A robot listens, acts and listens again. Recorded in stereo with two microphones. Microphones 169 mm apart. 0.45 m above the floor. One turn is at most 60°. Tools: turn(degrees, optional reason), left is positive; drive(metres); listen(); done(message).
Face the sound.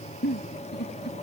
turn(degrees=60, reason="The giggle: about 75° left or 105° left.")
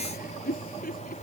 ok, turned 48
turn(degrees=60, reason="So it is at 60° left.")
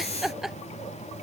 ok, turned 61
done("Found it: a giggle, straight ahead.")